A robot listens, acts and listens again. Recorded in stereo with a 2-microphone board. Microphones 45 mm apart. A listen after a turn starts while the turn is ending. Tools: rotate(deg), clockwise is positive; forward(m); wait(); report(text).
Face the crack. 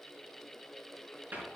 wait()
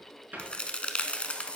rotate(-20)
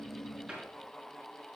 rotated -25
wait()
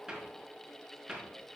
report("I heard a crack, but can't make it out now. It was about 5° right or 135° left.")